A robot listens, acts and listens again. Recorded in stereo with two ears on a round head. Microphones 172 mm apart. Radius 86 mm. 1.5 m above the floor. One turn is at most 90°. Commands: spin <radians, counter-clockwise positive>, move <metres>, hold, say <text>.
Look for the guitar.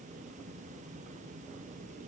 hold
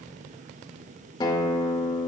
spin 0.44
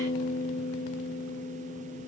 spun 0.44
spin 1.57
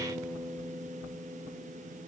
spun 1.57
say Found it: a guitar, straight ahead, 2 to 4 m away.